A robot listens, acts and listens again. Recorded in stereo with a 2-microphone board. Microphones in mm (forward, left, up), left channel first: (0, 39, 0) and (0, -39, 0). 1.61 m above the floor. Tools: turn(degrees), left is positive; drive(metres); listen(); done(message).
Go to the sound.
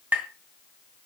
turn(degrees=-20)
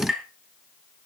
drive(metres=1.0)
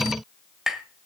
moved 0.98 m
drive(metres=1.0)
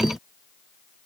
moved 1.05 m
listen()
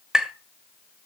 turn(degrees=-15)
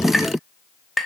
drive(metres=1.0)
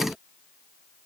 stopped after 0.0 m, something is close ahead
done("I am next to the tapping.")